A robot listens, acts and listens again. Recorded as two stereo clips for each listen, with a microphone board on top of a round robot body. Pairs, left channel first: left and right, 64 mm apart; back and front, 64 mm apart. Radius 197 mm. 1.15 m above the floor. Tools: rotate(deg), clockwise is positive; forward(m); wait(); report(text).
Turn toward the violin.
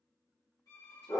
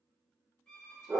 rotate(-110)
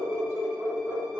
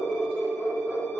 wait()
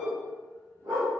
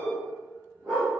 wait()
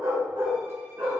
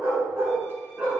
report("Facing where the violin came from. I can't hear it now.")